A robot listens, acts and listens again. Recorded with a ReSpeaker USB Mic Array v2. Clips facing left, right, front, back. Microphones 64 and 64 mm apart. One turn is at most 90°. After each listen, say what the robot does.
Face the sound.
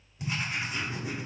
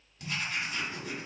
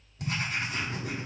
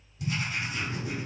Turn 20° left.
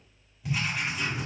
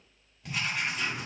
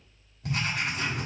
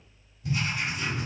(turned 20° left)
Facing the writing, 1 to 2 m away.